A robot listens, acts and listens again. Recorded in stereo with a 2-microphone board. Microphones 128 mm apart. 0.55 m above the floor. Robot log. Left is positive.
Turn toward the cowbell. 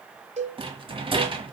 note: The cowbell: about 60° right or 120° right.
cmd yaw -60
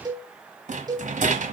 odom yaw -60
note: So it is at 35° right.
cmd yaw -35
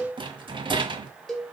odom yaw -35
end: Found it: a cowbell, straight ahead.